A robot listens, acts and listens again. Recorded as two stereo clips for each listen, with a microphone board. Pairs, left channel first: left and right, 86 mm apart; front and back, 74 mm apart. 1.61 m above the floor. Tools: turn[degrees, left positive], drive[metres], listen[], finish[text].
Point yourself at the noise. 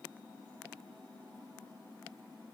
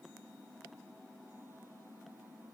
Action: listen[]
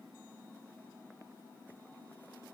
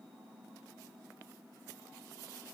Action: listen[]
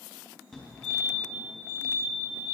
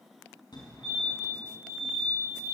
Thought: The fire alarm: 10° left.
Action: turn[10]
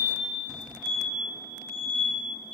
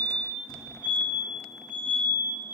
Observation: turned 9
Action: finish[Found it: a fire alarm, straight ahead.]